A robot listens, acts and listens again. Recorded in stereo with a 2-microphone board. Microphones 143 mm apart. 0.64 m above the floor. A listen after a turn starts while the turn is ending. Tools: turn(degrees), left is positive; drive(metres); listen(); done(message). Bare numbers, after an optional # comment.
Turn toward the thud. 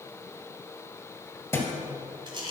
# The thud: about 20° left or 160° left.
turn(20)
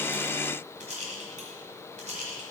listen()
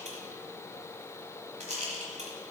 done("I heard a thud, but can't make it out now. It was about straight ahead or 140° left.")